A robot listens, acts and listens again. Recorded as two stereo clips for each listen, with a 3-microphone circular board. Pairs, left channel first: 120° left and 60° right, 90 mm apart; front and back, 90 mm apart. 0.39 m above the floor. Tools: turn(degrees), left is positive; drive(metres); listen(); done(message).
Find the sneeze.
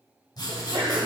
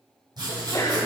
turn(degrees=-50)
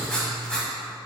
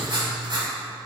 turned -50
done("Facing where the sneeze came from. I can't hear it now.")